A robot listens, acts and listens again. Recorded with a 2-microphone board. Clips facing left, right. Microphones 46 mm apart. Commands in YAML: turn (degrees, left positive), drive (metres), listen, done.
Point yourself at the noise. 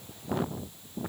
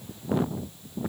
listen: true
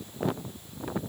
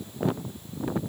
listen: true
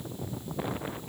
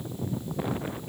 done: "I can't make out anything."